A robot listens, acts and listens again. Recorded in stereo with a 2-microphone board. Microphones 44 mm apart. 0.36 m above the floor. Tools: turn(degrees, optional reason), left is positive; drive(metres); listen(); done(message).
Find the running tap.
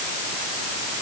listen()
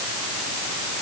listen()
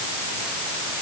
done("I can't make out a running tap.")